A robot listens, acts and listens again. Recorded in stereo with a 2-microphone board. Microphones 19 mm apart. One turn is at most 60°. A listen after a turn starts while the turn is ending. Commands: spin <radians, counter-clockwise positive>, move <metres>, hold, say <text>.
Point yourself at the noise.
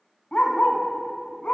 spin 1.05
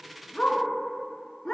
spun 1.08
spin 0.61
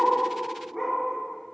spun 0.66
say Found it: a dog barking, straight ahead.